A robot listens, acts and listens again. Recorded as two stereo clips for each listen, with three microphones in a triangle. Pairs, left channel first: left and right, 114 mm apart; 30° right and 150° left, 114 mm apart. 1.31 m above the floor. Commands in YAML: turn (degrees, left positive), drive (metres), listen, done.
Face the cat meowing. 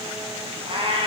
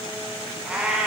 turn: -130
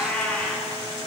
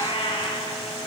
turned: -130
turn: 10
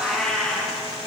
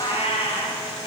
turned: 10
done: "Found it: a cat meowing, straight ahead, over 4 m away."